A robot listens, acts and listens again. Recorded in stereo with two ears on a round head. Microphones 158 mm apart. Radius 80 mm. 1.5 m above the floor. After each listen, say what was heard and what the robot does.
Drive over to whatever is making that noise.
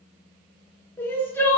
Turn 30° left.
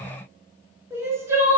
So it is at 15° right. Turn 15° right.
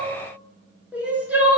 The crying is now 10° right. Turn 10° right.
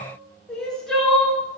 Drive 1.0 m forward.
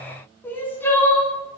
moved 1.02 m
The crying is now 15° left. Turn 15° left.
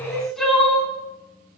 Drive 1.0 m forward.
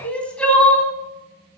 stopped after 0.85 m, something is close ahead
The crying is now 10° left. Turn 10° left.
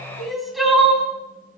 I am next to the crying.